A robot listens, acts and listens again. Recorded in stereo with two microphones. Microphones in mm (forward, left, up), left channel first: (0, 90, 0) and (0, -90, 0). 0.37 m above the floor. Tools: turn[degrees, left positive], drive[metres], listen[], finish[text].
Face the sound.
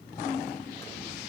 Action: listen[]
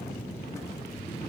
Action: listen[]
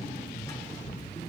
Action: finish[I can't make out anything to turn to.]